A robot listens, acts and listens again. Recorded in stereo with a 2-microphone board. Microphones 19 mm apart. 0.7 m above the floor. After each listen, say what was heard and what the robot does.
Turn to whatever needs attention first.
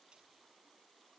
Keep listening.
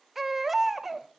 Turn 30° right.
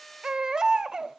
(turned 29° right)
So it is at 145° right. Turn 145° right.
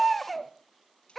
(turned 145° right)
Found it: a baby crying, straight ahead.